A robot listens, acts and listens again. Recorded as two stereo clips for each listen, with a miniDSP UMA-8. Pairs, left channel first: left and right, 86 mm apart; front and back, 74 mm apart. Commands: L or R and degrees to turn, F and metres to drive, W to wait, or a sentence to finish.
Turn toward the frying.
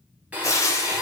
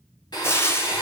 L50
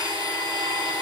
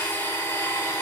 W
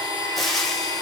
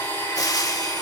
Facing the frying.